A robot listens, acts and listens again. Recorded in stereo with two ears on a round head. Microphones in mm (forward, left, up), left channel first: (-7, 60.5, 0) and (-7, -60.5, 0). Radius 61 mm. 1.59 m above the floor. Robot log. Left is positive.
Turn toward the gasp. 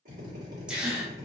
cmd yaw -30
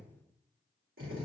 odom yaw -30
cmd idle
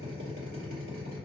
end: I heard a gasp, but can't make it out now. It was about 25° left or 145° right.